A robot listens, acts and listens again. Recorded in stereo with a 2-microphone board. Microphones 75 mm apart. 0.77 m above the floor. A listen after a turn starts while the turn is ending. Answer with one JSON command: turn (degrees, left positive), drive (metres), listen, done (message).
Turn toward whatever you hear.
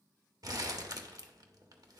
{"turn": -55}
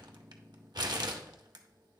{"turn": -65}
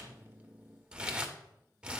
{"turn": -15}
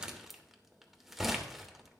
{"done": "Found it: crumpling, straight ahead, 1 to 2 m away."}